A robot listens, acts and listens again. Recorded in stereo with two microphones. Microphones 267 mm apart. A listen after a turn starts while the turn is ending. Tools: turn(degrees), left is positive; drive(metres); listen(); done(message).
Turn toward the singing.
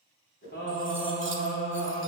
turn(degrees=60)
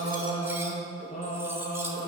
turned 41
turn(degrees=45)
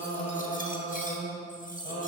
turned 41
turn(degrees=30)
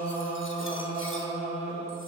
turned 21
turn(degrees=25)
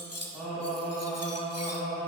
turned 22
done("Facing the singing, 2 to 4 m away.")